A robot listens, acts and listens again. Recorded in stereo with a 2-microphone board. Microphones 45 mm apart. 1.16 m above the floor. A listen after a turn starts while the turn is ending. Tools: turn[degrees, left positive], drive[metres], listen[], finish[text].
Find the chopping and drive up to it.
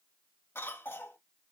Action: listen[]
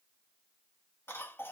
Action: listen[]
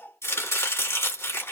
Action: turn[90]
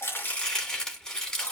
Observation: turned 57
Thought: So it is at 20° left.
Action: turn[20]
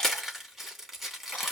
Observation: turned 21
Action: drive[1.0]
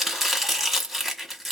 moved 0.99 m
Action: drive[1.0]
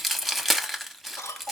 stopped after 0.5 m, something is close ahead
Action: finish[I am next to the chopping.]